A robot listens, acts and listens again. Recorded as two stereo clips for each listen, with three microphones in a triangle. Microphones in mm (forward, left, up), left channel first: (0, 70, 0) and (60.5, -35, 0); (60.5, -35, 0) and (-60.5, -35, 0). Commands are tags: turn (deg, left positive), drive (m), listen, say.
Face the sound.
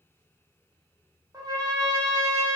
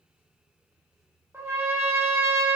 <turn deg="-115"/>
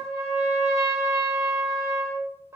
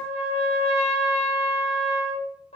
<say>Facing the trumpet.</say>